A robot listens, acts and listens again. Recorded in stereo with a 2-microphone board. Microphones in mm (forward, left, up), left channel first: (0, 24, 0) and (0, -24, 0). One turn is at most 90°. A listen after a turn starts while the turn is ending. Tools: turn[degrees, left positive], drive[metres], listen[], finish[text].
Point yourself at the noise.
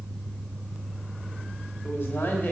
Thought: The man speaking: about 55° left or 125° left.
Action: turn[55]
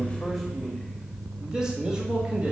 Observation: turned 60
Thought: So it is at 20° right.
Action: turn[-20]
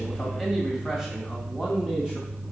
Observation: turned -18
Thought: The man speaking is now 15° right.
Action: turn[-15]
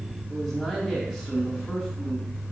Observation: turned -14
Action: finish[Facing the man speaking.]